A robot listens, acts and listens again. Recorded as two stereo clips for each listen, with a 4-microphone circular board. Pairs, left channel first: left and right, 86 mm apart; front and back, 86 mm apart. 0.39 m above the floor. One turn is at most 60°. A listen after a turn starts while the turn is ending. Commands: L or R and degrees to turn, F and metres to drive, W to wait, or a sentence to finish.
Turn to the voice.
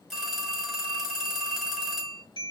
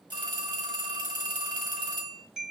W
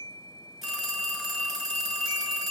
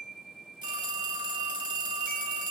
W
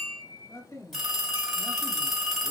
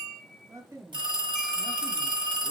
L60
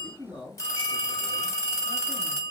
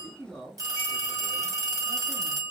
L60
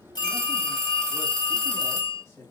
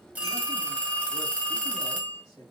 L35
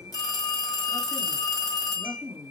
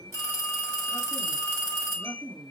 L15
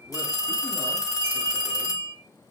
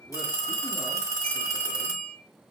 W
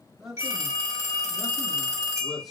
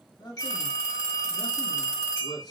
Facing the man speaking.